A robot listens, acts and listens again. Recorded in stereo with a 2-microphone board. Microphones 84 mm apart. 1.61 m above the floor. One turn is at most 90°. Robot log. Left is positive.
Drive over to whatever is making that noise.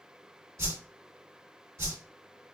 note: The whoosh: about 40° right or 140° right.
cmd yaw -40
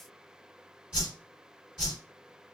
note: So it is at 10° right.
cmd yaw -10
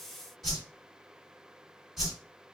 cmd fwd 1.0
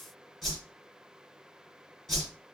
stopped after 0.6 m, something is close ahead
end: Arrived at the whoosh, straight ahead.